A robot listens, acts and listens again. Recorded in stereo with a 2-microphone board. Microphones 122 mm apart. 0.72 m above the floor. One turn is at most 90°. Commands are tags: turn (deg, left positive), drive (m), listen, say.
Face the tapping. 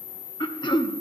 <listen/>
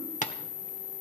<turn deg="90"/>
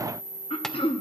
<listen/>
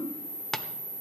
<say>Facing the tapping, 1 to 2 m away.</say>